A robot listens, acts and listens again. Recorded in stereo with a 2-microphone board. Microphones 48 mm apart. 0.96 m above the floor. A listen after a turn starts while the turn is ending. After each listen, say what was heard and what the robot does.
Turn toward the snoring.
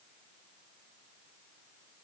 Keep listening.
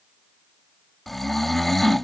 Turn 30° left.
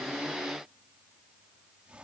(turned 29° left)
Keep listening.
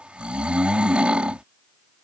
So it is at 25° right. Turn 25° right.
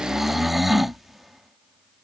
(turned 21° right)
Found it: snoring, straight ahead.